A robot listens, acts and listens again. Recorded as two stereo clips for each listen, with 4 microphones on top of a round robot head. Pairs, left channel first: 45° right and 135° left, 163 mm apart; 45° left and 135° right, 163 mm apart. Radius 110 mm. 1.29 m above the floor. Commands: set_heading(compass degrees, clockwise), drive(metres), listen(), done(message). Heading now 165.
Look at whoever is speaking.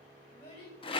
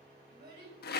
set_heading(260)
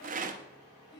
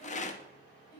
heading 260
set_heading(280)
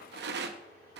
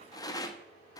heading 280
listen()
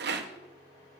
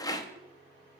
listen()
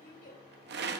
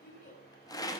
done("Found it: a child speaking, straight ahead, over 4 m away.")